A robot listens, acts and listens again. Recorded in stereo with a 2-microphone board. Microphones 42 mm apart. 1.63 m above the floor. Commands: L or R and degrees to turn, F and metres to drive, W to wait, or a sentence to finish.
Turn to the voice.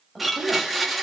L30
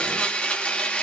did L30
W
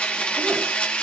W
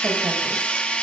I heard a woman speaking, but can't make it out now. It was about 30° right or 150° left.